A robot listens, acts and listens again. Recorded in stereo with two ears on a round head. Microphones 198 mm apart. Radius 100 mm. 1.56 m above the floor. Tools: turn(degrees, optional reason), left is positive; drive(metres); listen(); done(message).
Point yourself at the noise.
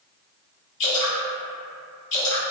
turn(degrees=60, reason="The dripping: about 60° left or 120° left.")
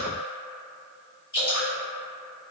turn(degrees=20, reason="So it is at 20° left.")
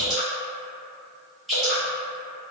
done("Found it: dripping, straight ahead.")